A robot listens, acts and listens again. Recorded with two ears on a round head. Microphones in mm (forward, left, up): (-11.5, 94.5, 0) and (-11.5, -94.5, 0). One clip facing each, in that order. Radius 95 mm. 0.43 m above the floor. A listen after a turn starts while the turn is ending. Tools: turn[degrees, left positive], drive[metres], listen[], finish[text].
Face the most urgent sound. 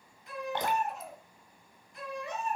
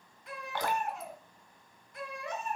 Thought: The baby crying: about 45° right or 135° right.
Action: turn[-45]
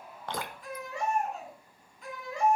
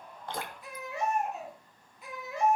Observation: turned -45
Action: finish[Found it: a baby crying, straight ahead.]